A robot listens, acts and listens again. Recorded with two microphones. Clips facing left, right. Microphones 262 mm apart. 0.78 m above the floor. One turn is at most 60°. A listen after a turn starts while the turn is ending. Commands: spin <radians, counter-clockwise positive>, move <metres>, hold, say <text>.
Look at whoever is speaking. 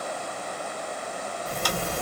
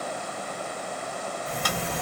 hold
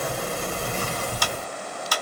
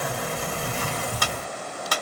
hold
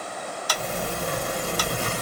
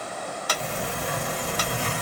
say I can't make out anyone speaking to turn to.